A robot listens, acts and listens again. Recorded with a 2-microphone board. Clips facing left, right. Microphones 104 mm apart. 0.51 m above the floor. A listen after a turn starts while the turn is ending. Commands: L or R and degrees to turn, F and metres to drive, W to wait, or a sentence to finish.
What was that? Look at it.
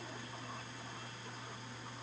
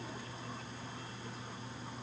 W
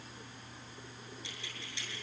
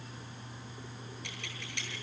R65
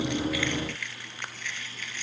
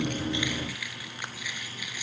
R10
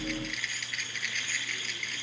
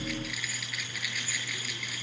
Facing the keys jangling, over 4 m away.